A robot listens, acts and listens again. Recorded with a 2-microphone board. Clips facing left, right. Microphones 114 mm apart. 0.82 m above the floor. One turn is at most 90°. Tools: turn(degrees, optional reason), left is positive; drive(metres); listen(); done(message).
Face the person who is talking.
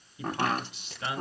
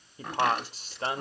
turn(degrees=-40, reason="The man speaking: about 40° right or 140° right.")
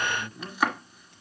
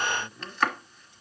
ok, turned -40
turn(degrees=-10, reason="So it is at 10° right.")
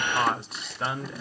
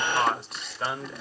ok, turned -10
done("Facing the man speaking, 1 to 2 m away.")